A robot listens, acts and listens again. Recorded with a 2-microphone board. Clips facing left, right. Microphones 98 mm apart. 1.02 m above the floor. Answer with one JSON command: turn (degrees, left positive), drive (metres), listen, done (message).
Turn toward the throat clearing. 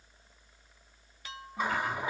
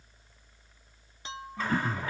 {"turn": -40}
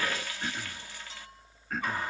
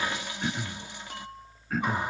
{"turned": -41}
{"done": "Found it: throat clearing, straight ahead."}